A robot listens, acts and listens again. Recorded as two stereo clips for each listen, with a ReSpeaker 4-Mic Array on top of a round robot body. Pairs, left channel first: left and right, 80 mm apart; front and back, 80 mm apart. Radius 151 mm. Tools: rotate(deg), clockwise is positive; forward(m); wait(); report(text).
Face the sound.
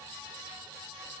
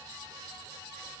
wait()
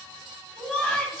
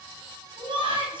rotate(-180)
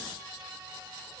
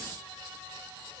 wait()
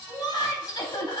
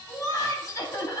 rotate(-55)
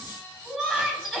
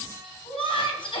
report("Found it: laughter, straight ahead, 2 to 4 m away.")